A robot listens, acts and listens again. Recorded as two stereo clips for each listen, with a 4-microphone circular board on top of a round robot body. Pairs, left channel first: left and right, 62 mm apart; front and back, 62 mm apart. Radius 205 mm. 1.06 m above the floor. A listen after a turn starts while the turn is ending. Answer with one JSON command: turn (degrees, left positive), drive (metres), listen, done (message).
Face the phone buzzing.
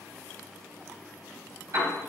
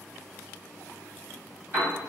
{"listen": true}
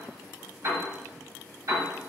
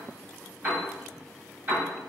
{"listen": true}
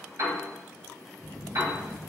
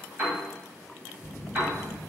{"turn": -80}
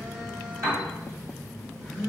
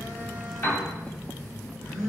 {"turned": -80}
{"done": "Facing the phone buzzing, 1 to 2 m away."}